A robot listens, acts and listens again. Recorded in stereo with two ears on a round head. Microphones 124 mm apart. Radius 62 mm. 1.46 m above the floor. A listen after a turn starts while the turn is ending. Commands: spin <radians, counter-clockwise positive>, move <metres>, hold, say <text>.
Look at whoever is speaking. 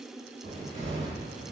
hold
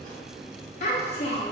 spin 0.87
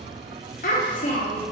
spin 1.31
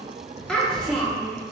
say Facing the child speaking, under 1 m away.